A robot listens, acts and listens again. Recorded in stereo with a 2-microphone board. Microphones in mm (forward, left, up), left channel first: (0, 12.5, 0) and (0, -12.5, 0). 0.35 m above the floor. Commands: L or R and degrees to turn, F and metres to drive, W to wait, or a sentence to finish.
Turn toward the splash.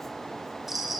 W
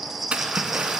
R60
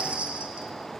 W
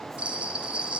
I heard a splash, but can't make it out now. It was about straight ahead or 60° right.